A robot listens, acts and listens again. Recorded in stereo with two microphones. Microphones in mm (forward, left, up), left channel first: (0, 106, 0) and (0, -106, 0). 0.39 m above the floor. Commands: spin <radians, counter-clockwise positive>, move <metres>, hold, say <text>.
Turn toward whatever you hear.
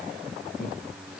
spin 0.96
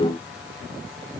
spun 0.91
hold
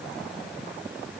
hold
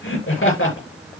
spin 1.40
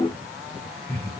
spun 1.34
spin 0.17
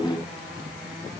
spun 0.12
hold
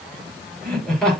say Facing the laughter.